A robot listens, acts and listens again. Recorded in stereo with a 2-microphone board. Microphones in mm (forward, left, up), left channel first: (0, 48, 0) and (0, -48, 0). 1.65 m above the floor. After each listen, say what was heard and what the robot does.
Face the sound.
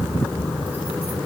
Keep listening.
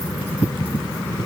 Keep listening.
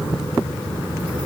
I can't make out anything.